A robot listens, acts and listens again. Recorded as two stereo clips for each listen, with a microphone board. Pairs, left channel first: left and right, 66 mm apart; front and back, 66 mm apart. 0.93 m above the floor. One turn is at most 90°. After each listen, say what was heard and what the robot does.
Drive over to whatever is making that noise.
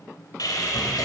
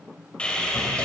The sawing: 75° left. Turn 75° left.
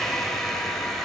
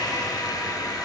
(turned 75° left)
Drive 1.0 m forward.
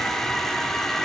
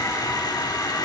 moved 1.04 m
Drive 1.0 m forward.
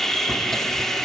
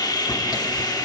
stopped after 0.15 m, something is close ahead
Arrived at the sawing, straight ahead.